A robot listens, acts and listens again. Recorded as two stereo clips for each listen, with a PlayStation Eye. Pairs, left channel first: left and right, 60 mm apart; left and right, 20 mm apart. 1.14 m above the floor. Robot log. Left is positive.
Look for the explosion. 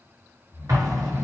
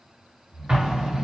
note: The explosion: about 65° right or 115° right.
cmd yaw -65
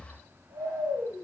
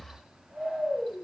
cmd idle
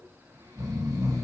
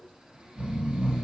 end: I heard an explosion, but can't make it out now. It was about straight ahead or 50° right.